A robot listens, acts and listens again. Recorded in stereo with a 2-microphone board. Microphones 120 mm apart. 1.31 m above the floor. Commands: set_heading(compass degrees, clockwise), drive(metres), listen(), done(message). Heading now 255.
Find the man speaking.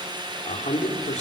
set_heading(165)
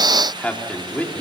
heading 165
set_heading(150)
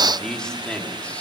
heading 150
set_heading(140)
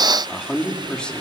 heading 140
set_heading(130)
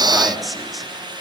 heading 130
done("Facing the man speaking, 2 to 4 m away.")